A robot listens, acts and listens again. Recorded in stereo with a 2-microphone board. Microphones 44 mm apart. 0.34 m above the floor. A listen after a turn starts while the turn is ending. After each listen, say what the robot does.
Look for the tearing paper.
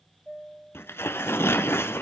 Turn 70° left.
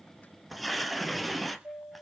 Found it: tearing paper, straight ahead.